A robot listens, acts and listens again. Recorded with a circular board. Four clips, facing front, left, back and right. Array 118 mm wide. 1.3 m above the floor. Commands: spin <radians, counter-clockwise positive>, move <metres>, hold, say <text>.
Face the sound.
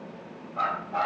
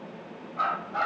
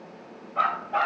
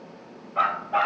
spin -2.09
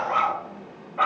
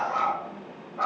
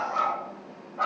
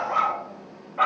spin -0.70
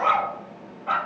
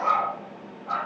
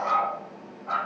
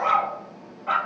spin -0.87
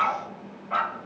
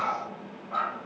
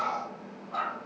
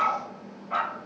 spin -0.44
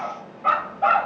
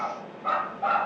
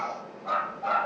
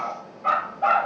spin -0.35
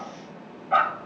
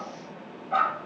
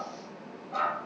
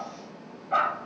say Facing the dog barking, 1 to 2 m away.